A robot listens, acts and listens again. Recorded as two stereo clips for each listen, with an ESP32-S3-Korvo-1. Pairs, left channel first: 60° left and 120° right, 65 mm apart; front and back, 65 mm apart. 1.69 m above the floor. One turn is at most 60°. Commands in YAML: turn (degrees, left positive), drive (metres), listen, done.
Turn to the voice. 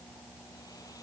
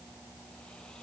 listen: true
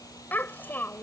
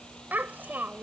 turn: 60
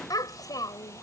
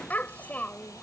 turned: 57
turn: 60
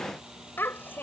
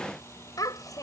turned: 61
done: "Found it: a child speaking, straight ahead."